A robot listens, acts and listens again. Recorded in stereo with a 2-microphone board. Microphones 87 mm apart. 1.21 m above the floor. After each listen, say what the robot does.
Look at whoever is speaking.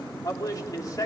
Turn 45° left.
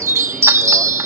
Keep listening.
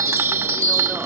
Keep listening.
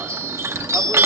I heard a man speaking, but can't make it out now. It was about straight ahead or 90° left.